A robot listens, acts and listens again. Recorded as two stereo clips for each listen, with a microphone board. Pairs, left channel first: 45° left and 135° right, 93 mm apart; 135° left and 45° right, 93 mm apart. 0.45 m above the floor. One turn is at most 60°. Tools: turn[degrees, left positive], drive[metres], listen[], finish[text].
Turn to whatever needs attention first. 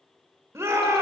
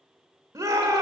Thought: The shout: 85° right.
Action: turn[-60]
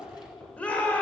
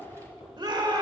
Thought: The shout is now 25° right.
Action: turn[-25]
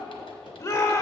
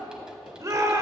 Action: finish[Facing the shout.]